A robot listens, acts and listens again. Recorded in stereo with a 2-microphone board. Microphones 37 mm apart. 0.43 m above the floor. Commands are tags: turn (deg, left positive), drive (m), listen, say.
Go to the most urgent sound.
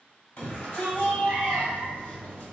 <turn deg="55"/>
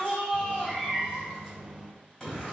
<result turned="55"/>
<turn deg="10"/>
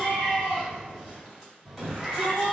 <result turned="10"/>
<drive m="1.0"/>
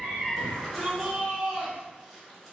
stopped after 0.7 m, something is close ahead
<say>I am next to the shout.</say>